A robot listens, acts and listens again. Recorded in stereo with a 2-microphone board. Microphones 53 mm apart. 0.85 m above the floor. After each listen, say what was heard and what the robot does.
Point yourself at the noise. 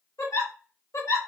The giggle: about 65° left or 115° left. Turn 65° left.
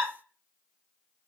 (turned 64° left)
So it is at 20° left. Turn 20° left.
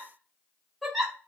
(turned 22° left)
Facing the giggle, under 1 m away.